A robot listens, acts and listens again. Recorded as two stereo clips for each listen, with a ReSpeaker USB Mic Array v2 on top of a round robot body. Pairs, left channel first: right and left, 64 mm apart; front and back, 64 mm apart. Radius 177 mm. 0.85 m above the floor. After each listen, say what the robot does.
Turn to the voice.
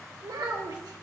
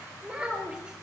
Turn 105° left.
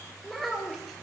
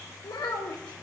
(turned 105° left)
Facing the child speaking.